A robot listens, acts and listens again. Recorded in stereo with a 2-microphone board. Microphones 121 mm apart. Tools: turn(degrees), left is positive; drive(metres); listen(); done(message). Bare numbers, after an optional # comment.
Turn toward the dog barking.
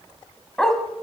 turn(30)
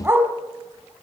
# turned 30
# So it is at 20° right.
turn(-20)
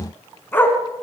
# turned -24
# The dog barking is now 15° left.
turn(15)
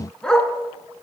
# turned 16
done("Facing the dog barking, 2 to 4 m away.")